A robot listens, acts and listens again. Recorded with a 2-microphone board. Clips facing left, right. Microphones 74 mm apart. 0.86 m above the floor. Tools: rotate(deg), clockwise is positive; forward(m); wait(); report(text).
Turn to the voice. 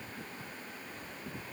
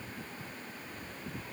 wait()
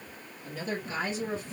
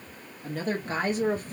rotate(50)
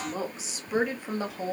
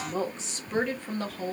rotate(-20)
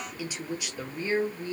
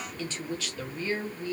rotate(-30)
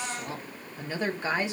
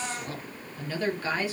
rotate(-20)
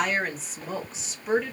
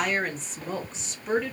report("Facing the woman speaking.")